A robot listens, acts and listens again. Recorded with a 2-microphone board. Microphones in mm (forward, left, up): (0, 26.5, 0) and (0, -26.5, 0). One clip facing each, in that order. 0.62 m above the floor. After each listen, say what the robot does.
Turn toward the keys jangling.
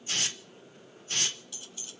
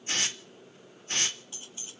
Turn 30° right.
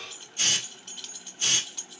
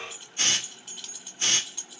Found it: keys jangling, straight ahead, under 1 m away.